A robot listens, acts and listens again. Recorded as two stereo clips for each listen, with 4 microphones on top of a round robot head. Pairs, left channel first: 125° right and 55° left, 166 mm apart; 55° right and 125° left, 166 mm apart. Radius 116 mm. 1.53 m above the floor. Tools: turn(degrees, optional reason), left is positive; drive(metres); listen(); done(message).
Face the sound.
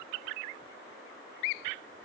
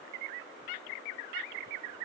listen()
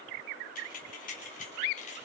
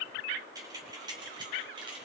turn(degrees=-170, reason="The keys jangling: 170° right.")
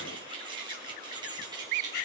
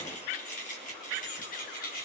turn(degrees=-15, reason="The keys jangling is now 15° right.")
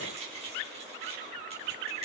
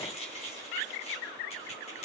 done("Facing the keys jangling, 2 to 4 m away.")